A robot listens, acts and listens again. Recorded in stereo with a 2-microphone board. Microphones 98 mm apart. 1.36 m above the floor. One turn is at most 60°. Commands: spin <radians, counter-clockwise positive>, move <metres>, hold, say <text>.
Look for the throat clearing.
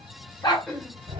spin 0.52
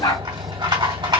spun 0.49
hold
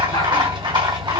hold
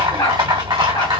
say I heard throat clearing, but can't make it out now. It was about 20° right or 145° left.